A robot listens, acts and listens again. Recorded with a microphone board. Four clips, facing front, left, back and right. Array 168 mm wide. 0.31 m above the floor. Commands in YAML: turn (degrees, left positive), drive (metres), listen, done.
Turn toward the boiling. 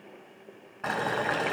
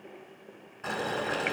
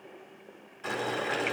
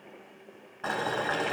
turn: -35
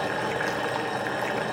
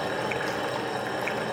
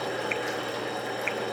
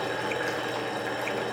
turn: 10
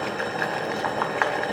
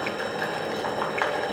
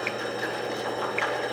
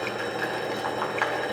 done: "Found it: boiling, straight ahead, 2 to 4 m away."